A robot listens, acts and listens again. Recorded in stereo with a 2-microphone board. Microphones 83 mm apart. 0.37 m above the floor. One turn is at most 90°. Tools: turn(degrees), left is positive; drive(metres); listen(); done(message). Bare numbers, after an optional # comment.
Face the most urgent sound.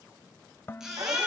turn(-30)
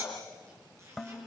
# So it is at 145° right.
turn(-90)
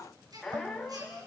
# The baby crying is now 50° right.
turn(-50)
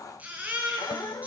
# The baby crying is now 20° right.
turn(-20)
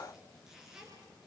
done("Facing the baby crying.")